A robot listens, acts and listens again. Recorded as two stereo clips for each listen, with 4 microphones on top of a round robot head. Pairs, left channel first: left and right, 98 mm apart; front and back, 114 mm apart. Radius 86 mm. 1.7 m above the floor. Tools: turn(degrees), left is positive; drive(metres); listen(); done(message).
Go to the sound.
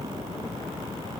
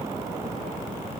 listen()
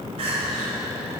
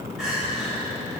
turn(degrees=-95)
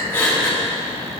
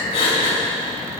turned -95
turn(degrees=25)
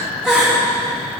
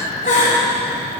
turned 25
turn(degrees=-10)
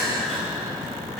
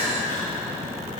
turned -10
drive(metres=1.0)
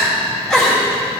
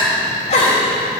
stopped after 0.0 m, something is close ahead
done("Something is in my way. I am facing the crying but have not reached it.")